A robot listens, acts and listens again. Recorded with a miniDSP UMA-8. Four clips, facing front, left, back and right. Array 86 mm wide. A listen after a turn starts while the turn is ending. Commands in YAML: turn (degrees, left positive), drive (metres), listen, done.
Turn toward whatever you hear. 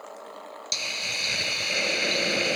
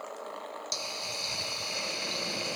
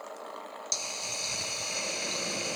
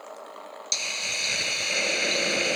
turn: -45
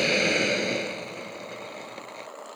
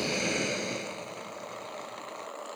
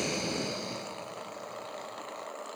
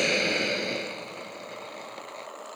turn: -20
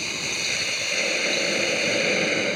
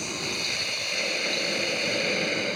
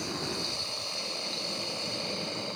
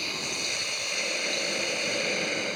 done: "Facing the hiss."